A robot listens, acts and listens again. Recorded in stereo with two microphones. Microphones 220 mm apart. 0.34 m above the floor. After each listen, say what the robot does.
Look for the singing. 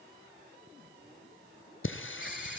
Turn 60° left.
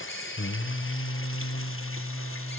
Turn 85° left.
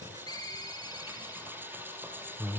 Turn 10° right.
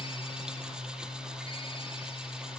Found it: singing, straight ahead, 2 to 4 m away.